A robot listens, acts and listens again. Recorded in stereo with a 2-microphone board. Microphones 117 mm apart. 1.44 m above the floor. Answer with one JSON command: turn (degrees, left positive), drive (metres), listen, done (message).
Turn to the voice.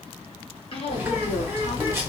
{"turn": 55}
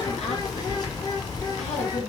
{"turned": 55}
{"listen": true}
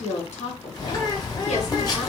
{"turn": 70}
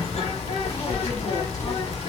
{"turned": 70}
{"listen": true}
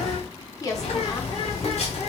{"turn": 30}
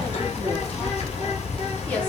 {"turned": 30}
{"listen": true}
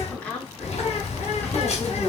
{"turn": 10}
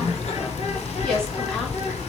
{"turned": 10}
{"listen": true}
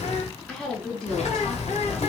{"done": "Facing the woman speaking, 1 to 2 m away."}